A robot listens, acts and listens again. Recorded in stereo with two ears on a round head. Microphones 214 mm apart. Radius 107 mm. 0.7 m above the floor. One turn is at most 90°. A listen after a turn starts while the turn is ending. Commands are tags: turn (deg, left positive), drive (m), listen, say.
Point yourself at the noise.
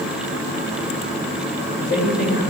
<turn deg="40"/>
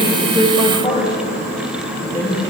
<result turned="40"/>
<turn deg="15"/>
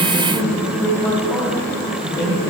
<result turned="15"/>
<turn deg="10"/>
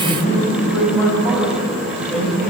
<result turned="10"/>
<say>Facing the man speaking, over 4 m away.</say>